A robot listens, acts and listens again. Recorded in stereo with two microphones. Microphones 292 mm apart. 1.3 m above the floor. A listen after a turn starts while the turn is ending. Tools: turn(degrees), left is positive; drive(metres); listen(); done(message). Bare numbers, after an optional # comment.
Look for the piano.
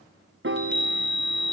# The piano: about 45° right or 135° right.
turn(-45)
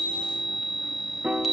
done("Facing the piano, under 1 m away.")